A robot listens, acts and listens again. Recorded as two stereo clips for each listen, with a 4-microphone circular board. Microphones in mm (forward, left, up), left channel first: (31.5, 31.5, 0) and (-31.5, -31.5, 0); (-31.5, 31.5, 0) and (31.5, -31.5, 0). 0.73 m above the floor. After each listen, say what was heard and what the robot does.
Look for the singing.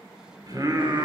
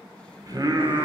The singing: 80° right. Turn 80° right.
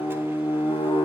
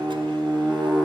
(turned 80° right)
The singing is now 45° left. Turn 45° left.
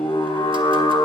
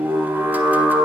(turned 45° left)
The singing is now 30° left. Turn 30° left.
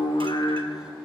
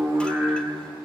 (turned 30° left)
The singing is now 10° left. Turn 10° left.
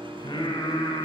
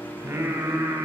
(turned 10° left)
The singing is now 10° left. Turn 10° left.
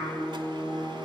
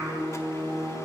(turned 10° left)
Facing the singing, 2 to 4 m away.